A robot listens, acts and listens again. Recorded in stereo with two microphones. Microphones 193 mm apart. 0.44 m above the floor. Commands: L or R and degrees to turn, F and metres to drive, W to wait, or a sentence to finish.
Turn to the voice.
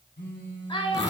L25
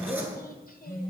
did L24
W
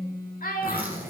L130
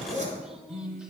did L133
W
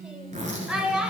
Found it: a child speaking, straight ahead, under 1 m away.